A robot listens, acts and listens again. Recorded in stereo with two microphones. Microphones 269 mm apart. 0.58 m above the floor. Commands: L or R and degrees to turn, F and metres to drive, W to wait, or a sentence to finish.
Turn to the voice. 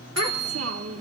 R60
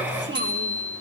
R50
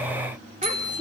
W
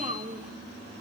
R30
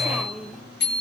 Found it: a child speaking, straight ahead, under 1 m away.